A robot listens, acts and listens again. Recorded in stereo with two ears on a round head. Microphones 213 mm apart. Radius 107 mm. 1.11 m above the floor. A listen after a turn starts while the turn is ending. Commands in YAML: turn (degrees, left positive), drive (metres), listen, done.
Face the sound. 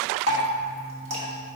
turn: -30
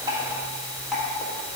done: "Facing the dripping, 1 to 2 m away."